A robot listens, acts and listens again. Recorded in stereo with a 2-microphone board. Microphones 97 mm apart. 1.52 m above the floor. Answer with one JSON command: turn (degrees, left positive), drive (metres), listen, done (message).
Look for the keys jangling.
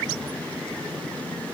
{"listen": true}
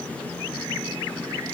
{"listen": true}
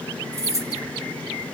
{"turn": -30}
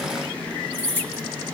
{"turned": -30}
{"turn": 20}
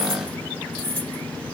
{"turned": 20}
{"turn": 20}
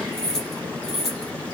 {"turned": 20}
{"done": "Facing the keys jangling."}